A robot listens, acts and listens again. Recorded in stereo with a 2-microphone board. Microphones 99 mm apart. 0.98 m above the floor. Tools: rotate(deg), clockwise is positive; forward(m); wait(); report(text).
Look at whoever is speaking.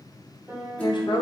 rotate(-45)
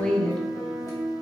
rotate(-10)
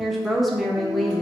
report("Facing the woman speaking, under 1 m away.")